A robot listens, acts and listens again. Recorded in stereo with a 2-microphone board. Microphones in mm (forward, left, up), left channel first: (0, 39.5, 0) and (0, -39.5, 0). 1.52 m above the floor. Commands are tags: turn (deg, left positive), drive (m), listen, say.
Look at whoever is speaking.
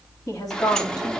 <turn deg="55"/>
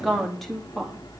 <say>Facing the woman speaking.</say>